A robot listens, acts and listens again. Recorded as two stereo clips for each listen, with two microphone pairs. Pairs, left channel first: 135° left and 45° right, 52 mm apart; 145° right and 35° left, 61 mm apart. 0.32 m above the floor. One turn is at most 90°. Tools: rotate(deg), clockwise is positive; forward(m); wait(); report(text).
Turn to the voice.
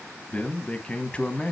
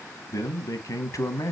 rotate(90)
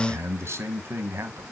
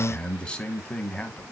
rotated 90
rotate(75)
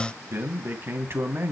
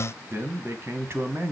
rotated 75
rotate(10)
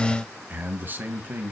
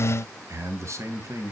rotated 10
report("Facing the man speaking.")